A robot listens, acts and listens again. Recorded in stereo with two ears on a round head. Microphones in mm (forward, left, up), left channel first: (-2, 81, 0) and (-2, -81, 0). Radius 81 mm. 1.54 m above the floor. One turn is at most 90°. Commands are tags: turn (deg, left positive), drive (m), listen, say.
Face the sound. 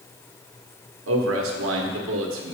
<turn deg="-90"/>
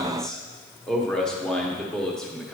<say>Facing the man speaking, 1 to 2 m away.</say>